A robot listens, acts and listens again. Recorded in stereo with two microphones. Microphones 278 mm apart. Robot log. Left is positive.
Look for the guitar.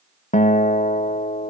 note: The guitar: about 25° left or 155° left.
cmd yaw +25
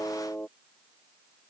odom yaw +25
end: Found it: a guitar, straight ahead.